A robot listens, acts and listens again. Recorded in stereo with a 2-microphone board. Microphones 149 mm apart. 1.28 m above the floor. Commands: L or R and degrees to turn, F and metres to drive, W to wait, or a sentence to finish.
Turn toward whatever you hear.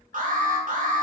R60
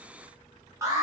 R20
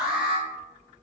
Found it: an alarm, straight ahead.